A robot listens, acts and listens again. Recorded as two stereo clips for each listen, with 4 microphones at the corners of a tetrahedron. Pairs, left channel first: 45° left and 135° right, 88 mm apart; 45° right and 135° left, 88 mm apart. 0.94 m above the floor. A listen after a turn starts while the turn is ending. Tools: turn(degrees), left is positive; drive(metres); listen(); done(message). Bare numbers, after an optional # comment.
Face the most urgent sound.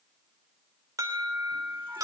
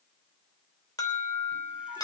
# The alarm: 90° right.
turn(-90)
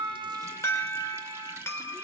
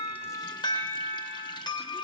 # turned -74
# The alarm is now 15° right.
turn(-15)
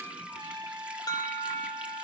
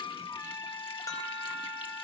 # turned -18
done("Facing the alarm.")